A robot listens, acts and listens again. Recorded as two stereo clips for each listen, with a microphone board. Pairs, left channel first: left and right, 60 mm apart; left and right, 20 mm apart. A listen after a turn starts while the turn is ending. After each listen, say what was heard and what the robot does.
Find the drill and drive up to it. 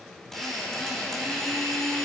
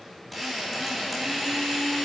Turn 30° left.
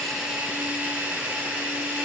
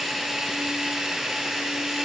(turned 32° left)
So it is at 25° right. Turn 25° right.
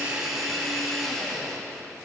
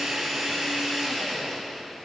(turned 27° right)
Drive 1.0 m forward.
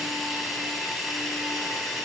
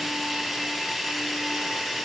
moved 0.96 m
Drive 1.0 m forward.
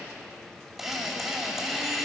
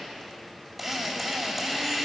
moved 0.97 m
Drive 1.0 m forward.
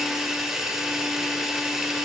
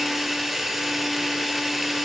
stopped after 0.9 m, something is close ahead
The drill is now 10° right. Turn 10° right.
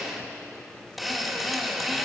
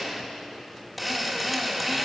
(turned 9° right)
I am next to the drill.